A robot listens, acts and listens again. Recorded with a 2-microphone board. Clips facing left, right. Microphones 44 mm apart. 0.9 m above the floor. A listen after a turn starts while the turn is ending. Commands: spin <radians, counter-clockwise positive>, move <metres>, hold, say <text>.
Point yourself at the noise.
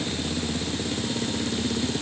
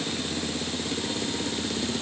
hold
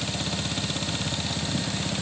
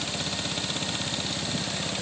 hold
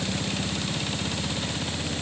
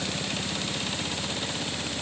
say I can't make out anything to turn to.